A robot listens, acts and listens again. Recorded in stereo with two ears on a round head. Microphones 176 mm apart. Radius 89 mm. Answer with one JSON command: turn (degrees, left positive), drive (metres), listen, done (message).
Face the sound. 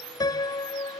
{"turn": 20}
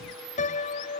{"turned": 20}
{"turn": 140}
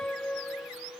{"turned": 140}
{"done": "Facing the piano."}